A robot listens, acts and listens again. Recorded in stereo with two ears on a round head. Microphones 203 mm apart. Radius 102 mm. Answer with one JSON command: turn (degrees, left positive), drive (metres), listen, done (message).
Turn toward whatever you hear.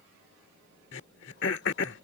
{"turn": 55}
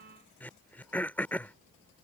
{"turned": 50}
{"turn": 10}
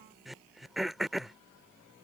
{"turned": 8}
{"done": "Found it: throat clearing, straight ahead."}